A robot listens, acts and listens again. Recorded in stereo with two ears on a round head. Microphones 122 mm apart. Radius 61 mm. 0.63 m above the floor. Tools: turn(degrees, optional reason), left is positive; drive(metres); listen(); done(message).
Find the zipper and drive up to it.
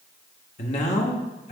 listen()
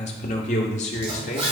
turn(degrees=-40, reason="The zipper: about 40° right or 140° right.")
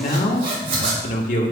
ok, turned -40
turn(degrees=-100, reason="So it is at 100° right.")
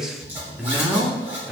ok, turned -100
turn(degrees=-15, reason="The zipper is now 15° right.")
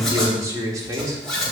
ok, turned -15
drive(metres=1.0)
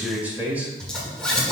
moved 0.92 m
drive(metres=1.0)
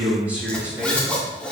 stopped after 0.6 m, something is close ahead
turn(degrees=10, reason="The zipper is now 10° left.")
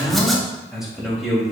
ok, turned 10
listen()
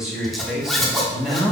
done("I am next to the zipper.")